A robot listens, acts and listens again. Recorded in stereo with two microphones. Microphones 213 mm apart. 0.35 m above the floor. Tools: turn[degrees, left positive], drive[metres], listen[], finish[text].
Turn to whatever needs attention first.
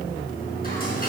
Action: listen[]
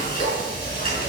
Action: listen[]
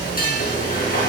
Action: finish[I can't make out anything urgent, only frying.]